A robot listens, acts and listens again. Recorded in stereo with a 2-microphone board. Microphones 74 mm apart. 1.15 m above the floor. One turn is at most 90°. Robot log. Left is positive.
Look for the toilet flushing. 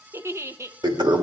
cmd yaw -90
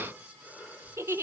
cmd idle
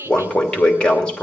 note: The toilet flushing is now 15° left.
cmd yaw +15
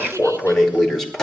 end: Found it: a toilet flushing, straight ahead, 2 to 4 m away.